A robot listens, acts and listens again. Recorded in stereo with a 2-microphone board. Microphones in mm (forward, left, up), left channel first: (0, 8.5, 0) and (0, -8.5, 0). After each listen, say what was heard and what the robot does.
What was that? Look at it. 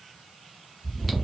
Turn 30° left.
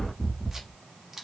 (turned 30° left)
So it is at 25° right. Turn 25° right.
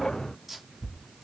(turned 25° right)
The chewing is now 10° right. Turn 10° right.
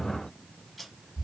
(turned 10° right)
Facing the chewing, 1 to 2 m away.